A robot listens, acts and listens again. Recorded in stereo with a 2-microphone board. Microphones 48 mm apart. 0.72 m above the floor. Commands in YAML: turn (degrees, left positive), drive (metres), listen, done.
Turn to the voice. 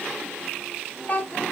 turn: 40
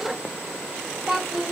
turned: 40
done: "Facing the child speaking, over 4 m away."